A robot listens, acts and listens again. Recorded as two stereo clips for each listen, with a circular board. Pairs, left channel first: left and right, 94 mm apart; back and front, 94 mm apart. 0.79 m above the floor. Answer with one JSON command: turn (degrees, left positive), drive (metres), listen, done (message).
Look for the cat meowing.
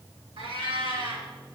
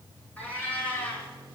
{"turn": -105}
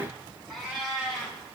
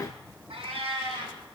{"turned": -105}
{"done": "Facing the cat meowing."}